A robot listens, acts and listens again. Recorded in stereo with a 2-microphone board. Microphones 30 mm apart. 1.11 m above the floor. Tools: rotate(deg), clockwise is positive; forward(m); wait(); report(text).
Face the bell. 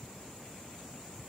wait()
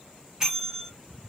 rotate(20)
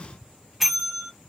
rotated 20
report("Found it: a bell, straight ahead, 1 to 2 m away.")